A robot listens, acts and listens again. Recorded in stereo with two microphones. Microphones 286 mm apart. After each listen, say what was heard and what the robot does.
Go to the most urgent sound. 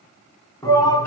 Turn 30° left.
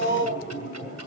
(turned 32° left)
So it is at 135° left. Turn 135° left.
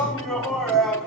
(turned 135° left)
Drive 1.0 m forward.
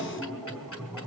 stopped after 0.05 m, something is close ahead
Blocked. The shout is further on, straight ahead.